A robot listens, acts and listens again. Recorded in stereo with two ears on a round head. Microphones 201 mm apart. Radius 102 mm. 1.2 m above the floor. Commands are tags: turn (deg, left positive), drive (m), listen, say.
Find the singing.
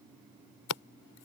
<listen/>
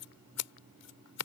<listen/>
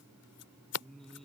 <turn deg="30"/>
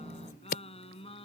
<turn deg="155"/>
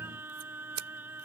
<turn deg="-10"/>
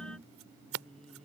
<say>Found it: singing, straight ahead.</say>